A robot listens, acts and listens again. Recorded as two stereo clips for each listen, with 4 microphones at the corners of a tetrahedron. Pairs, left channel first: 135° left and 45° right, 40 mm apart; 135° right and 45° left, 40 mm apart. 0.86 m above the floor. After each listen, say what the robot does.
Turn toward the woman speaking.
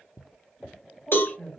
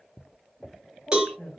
Turn 170° right.
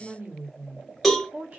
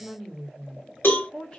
Turn 80° right.
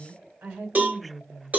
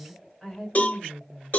Turn 55° right.
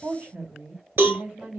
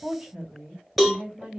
Turn 25° right.
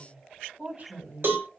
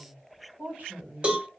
Facing the woman speaking, 2 to 4 m away.